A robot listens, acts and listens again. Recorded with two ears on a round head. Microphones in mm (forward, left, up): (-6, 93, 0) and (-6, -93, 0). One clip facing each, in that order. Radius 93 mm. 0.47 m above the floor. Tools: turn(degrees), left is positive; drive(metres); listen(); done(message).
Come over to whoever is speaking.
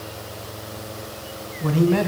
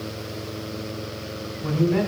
turn(degrees=55)
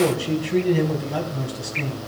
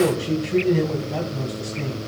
drive(metres=1.0)
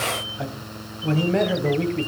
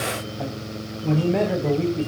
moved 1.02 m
drive(metres=1.0)
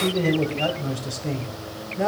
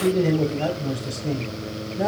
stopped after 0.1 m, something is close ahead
done("Something is in my way. I am facing the man speaking but have not reached it.")